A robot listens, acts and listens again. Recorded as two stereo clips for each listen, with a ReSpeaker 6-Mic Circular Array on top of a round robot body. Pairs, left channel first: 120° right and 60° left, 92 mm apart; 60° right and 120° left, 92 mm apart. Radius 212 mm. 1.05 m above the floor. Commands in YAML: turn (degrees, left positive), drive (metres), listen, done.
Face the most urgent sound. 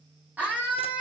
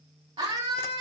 turn: 135
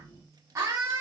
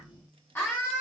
done: "Facing the scream."